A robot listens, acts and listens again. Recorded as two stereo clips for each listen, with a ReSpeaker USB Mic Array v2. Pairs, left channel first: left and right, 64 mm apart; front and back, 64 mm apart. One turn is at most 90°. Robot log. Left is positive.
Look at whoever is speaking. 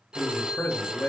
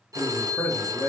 note: The man speaking: 40° left.
cmd yaw +40
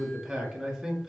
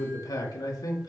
end: Facing the man speaking, 2 to 4 m away.